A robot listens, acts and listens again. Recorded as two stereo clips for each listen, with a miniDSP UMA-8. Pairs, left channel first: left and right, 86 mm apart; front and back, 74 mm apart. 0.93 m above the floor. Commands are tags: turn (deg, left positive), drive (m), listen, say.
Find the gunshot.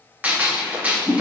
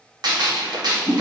<turn deg="-165"/>
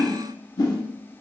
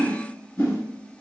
<say>Facing where the gunshot came from. I can't hear it now.</say>